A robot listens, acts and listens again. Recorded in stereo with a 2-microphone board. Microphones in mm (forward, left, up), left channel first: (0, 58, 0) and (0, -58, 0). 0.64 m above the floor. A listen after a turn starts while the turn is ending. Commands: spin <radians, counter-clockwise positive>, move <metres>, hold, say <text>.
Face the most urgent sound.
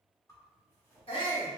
spin 0.87
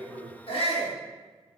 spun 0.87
spin 1.13
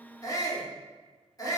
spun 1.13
spin 0.61
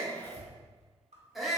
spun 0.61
say Facing the shout, 1 to 2 m away.